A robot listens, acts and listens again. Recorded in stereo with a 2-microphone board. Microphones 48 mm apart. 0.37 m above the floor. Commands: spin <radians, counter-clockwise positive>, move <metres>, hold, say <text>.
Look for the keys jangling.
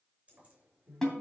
spin -0.44
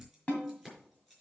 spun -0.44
say Facing the keys jangling.